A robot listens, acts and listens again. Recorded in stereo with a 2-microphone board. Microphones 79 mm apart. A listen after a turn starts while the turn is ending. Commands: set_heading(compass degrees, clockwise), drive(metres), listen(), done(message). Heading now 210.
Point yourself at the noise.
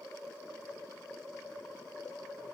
listen()
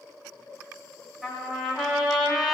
set_heading(240)
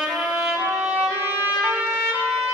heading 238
set_heading(18)
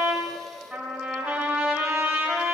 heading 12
set_heading(22)
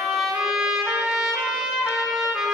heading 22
done("Facing the trumpet.")